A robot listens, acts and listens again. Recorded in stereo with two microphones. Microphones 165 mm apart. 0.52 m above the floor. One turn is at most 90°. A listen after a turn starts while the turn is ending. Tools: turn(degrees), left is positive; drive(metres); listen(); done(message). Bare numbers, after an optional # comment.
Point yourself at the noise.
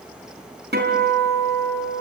turn(-90)
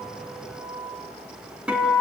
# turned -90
done("Found it: a guitar, straight ahead.")